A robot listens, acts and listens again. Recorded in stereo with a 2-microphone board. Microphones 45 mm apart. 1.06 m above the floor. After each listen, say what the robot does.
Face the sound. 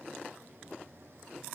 Keep listening.
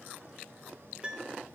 Turn 25° right.
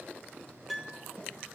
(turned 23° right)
Facing the piano, under 1 m away.